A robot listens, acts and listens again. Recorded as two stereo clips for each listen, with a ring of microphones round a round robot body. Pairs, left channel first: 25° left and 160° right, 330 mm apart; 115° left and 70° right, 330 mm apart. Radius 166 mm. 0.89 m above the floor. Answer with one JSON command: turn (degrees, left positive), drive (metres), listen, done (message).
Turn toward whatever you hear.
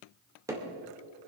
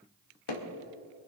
{"turn": 120}
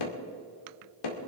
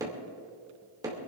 {"turn": 15}
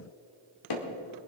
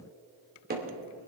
{"done": "Facing the hammering."}